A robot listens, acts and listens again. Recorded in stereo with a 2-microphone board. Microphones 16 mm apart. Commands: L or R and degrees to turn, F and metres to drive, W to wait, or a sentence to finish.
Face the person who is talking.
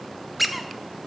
W
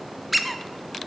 W
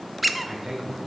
R30
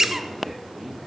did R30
Found it: a man speaking, straight ahead, over 4 m away.